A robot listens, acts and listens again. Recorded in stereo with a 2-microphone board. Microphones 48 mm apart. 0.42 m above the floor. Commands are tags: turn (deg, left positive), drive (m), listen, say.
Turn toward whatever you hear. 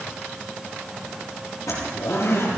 <turn deg="90"/>
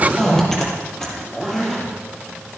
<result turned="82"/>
<turn deg="10"/>
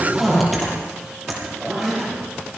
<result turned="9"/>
<say>Facing the zipper, over 4 m away.</say>